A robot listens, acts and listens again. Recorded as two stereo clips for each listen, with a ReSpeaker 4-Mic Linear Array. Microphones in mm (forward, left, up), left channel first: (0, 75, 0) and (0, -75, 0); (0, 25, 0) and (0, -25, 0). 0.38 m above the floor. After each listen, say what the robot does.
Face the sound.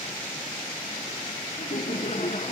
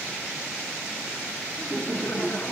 Turn 45° left.
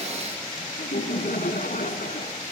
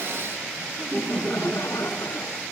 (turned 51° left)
Turn 75° left.
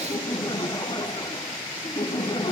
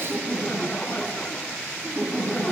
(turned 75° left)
Turn 35° left.
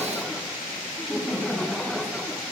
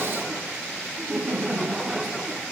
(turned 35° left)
Facing the laughter.